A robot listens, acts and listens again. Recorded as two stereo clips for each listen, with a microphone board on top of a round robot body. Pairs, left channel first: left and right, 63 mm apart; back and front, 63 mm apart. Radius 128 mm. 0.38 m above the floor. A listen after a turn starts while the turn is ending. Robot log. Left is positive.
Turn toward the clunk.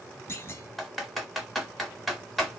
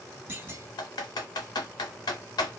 note: The clunk: 50° left.
cmd yaw +50
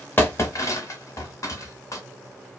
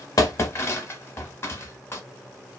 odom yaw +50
end: Facing where the clunk came from. I can't hear it now.